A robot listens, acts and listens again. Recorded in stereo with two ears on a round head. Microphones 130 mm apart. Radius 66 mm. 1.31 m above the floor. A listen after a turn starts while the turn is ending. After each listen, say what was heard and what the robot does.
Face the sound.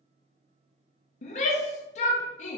The shout: about 50° left or 130° left. Turn 50° left.
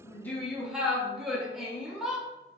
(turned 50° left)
Found it: a shout, straight ahead.